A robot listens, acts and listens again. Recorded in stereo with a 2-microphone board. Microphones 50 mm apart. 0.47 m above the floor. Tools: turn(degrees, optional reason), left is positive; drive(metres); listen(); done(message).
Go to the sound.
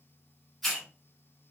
turn(degrees=30)
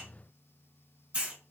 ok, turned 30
turn(degrees=-25, reason="So it is at 25° right.")
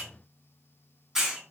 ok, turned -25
turn(degrees=-10, reason="The hiss is now 10° right.")
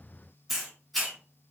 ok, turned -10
drive(metres=1.0)
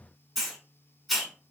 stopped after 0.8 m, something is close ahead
done("I am next to the hiss.")